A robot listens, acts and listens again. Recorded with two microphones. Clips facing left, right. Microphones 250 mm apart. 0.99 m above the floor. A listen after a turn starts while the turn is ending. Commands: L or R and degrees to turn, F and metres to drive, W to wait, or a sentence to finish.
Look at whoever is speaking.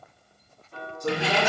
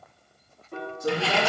R30
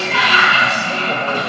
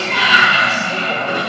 W
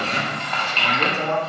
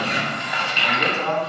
L25
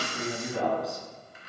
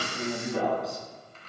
Found it: a man speaking, straight ahead.